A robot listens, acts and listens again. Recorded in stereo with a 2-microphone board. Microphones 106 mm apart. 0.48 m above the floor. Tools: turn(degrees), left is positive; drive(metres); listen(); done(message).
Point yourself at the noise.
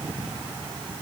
listen()
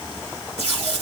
turn(degrees=-90)
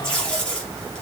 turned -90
turn(degrees=10)
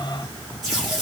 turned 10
done("Facing the tape being pulled.")